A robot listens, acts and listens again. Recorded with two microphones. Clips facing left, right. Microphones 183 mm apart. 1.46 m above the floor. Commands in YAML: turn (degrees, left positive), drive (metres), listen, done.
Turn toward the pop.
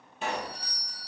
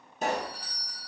turn: -40
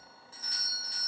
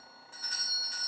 listen: true
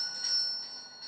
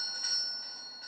done: "I heard a pop, but can't make it out now. It was about straight ahead or 100° right."